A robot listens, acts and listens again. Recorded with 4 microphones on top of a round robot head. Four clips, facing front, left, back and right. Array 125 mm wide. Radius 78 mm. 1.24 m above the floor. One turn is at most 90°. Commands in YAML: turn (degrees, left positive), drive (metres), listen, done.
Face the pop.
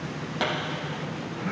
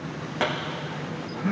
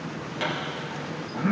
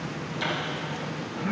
turn: 60
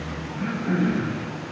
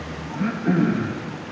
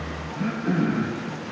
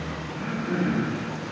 done: "Facing where the pop came from. I can't hear it now."